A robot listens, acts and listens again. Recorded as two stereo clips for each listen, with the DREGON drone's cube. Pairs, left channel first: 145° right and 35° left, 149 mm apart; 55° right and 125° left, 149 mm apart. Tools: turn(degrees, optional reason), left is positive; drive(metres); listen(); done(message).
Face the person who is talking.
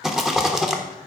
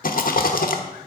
listen()
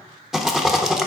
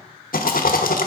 listen()
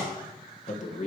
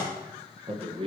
turn(degrees=175, reason="The man speaking: 175° left.")
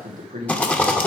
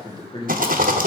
done("Found it: a man speaking, straight ahead, 1 to 2 m away.")